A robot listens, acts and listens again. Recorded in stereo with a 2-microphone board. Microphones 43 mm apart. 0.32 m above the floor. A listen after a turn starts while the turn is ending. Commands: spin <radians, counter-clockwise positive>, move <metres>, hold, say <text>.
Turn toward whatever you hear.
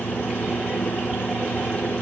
hold
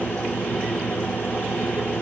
hold
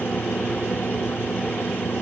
say I can't make out anything to turn to.